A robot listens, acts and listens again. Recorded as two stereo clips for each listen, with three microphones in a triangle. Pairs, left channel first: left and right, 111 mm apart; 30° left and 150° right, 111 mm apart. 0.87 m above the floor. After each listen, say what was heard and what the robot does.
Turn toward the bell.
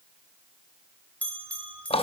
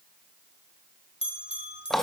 The bell: 15° left. Turn 15° left.
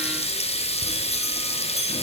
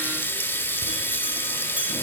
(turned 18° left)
Keep listening.
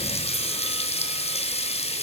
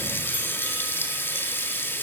Keep listening.
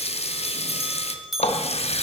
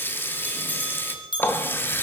Found it: a bell, straight ahead, 1 to 2 m away.